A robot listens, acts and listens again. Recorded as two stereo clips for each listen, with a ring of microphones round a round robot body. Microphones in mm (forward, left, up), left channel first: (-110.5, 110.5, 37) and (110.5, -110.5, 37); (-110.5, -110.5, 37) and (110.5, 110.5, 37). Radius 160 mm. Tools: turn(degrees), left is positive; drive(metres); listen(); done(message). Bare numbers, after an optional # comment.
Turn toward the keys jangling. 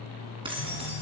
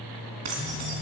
# The keys jangling: 30° left.
turn(30)
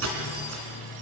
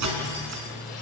done("Facing the keys jangling.")